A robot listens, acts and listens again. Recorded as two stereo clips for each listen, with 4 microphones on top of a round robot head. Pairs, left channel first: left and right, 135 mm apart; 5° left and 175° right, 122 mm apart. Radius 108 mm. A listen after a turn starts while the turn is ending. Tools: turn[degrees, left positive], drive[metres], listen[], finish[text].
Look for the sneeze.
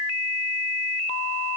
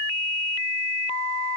Action: listen[]
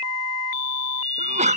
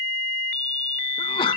Thought: The sneeze: 55° right.
Action: turn[-55]
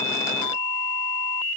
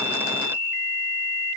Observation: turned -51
Action: finish[I heard a sneeze from this way, but can't make it out now.]